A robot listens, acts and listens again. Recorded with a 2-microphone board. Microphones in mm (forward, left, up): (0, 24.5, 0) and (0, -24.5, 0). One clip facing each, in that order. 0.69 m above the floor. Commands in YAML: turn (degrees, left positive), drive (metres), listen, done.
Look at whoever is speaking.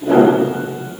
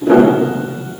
listen: true
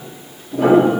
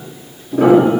listen: true
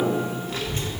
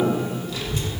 turn: 40
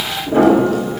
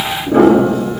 turn: 100
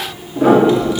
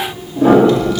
turn: 15
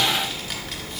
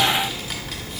done: "Facing the child speaking."